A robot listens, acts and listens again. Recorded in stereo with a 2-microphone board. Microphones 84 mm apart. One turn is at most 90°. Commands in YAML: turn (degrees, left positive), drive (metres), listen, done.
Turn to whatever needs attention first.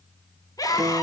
turn: 50
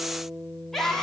done: "Found it: a scream, straight ahead."